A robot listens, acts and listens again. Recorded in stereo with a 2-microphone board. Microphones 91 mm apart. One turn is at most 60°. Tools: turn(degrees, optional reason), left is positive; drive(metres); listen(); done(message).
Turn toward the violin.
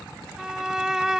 turn(degrees=-30)
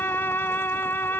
turn(degrees=25, reason="So it is at 25° left.")
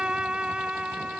turn(degrees=-10, reason="The violin is now 10° right.")
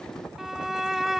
done("Found it: a violin, straight ahead.")